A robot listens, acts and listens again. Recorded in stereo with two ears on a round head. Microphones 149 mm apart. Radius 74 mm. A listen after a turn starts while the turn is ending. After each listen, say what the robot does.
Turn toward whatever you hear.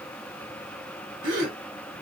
Turn 50° right.
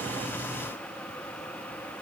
Keep listening.
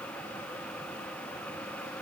I heard a gasp, but can't make it out now. It was about straight ahead or 80° right.